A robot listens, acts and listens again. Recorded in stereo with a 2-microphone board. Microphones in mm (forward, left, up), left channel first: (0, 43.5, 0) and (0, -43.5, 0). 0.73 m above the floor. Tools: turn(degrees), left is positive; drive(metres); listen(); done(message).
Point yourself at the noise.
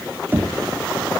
turn(degrees=-25)
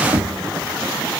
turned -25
turn(degrees=-130)
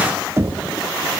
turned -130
turn(degrees=-30)
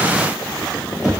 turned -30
done("Found it: knocking, straight ahead, 1 to 2 m away.")